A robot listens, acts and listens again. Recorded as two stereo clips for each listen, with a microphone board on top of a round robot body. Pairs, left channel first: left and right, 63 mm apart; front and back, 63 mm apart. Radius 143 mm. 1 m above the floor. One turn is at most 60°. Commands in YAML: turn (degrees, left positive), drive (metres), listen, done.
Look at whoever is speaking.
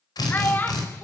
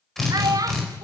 turn: 60
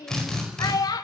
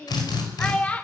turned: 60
turn: 60
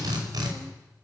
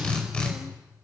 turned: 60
turn: 15
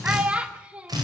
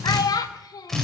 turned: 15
turn: -20
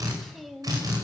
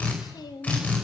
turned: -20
done: "Facing the child speaking, 1 to 2 m away."